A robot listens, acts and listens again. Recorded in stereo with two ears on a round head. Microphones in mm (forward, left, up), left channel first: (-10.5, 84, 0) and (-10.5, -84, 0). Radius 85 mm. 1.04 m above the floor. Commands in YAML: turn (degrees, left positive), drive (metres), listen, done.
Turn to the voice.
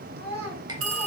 turn: -60
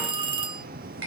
listen: true
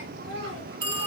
turn: -60
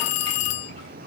listen: true
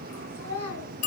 turn: 10
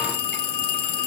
listen: true
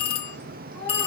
listen: true
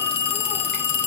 done: "I heard a child speaking from this way, but can't make it out now."